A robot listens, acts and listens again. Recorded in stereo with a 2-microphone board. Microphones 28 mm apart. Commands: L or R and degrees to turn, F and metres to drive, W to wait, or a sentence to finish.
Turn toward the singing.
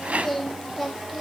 L30
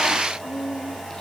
L155
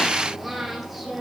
Facing the singing.